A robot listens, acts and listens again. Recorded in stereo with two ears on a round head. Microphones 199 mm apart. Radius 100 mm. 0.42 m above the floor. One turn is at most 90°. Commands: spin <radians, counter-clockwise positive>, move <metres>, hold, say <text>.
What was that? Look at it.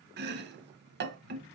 spin -0.87
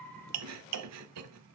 spin -1.40
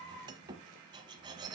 spin -0.35
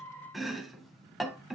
say Facing the chopping.